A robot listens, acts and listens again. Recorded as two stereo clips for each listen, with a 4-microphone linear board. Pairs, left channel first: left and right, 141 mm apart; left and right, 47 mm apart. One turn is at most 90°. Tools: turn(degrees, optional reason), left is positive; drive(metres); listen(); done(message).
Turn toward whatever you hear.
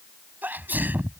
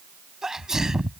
turn(degrees=-30)
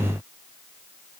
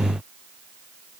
listen()
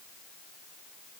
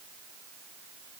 done("I heard a sneeze, but can't make it out now. It was about 20° left or 140° right.")